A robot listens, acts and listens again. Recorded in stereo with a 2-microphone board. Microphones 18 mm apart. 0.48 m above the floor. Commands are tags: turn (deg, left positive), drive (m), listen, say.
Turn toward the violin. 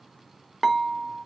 <listen/>
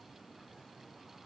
<listen/>
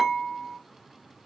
<say>I can't make out a violin, only dishes clattering.</say>